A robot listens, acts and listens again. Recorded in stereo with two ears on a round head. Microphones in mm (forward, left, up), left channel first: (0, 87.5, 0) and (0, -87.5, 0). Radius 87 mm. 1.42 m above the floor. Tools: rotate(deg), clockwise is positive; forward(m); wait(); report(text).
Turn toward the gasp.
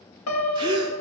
rotate(25)
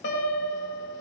wait()
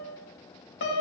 report("I heard a gasp, but can't make it out now. It was about straight ahead or 130° right.")